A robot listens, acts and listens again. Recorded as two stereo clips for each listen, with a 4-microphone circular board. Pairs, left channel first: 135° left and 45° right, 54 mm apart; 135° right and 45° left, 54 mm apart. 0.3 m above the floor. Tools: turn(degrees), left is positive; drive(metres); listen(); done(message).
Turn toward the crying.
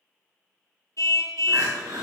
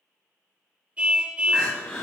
turn(degrees=-60)
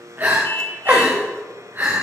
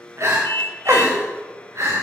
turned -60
done("Facing the crying, over 4 m away.")